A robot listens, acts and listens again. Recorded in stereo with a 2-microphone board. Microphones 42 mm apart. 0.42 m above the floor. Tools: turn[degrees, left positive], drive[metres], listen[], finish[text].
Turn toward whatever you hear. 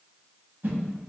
Thought: The whoosh: about 60° right or 120° right.
Action: turn[-60]
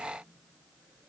Action: listen[]
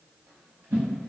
Thought: So it is at 60° right.
Action: turn[-60]
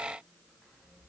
Action: listen[]
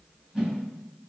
Thought: The whoosh is now 15° right.
Action: turn[-15]
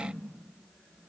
Action: listen[]
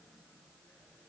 Action: listen[]
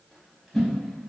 Action: finish[Facing the whoosh, under 1 m away.]